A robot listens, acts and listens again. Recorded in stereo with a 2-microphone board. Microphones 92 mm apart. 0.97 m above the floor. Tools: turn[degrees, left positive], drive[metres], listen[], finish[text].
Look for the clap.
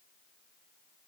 Action: listen[]
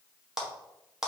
Action: turn[-30]
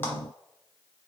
Action: listen[]
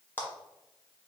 Thought: So it is at 25° left.
Action: turn[25]
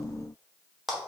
Action: finish[Found it: a clap, straight ahead, 1 to 2 m away.]